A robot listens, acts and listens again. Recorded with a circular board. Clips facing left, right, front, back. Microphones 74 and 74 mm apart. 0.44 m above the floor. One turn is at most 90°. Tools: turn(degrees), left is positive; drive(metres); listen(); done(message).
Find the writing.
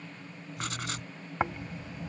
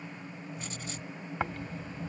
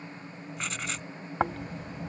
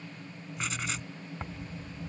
turn(degrees=90)
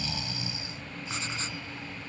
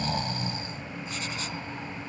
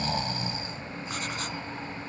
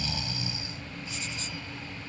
listen()
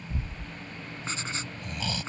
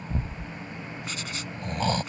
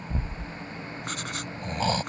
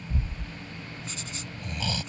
turn(degrees=30)
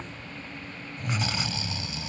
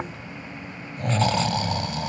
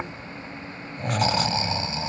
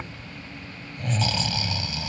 listen()
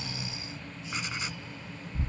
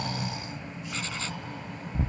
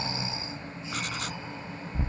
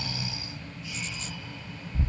listen()
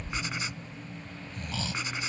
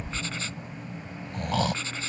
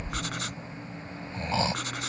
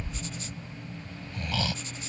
turn(degrees=15)
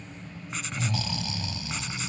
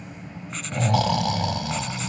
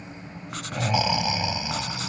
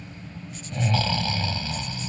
listen()
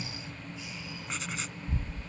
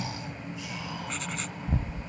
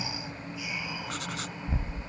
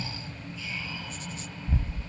listen()
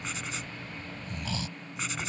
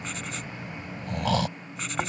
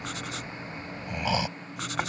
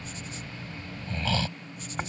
done("Found it: writing, straight ahead.")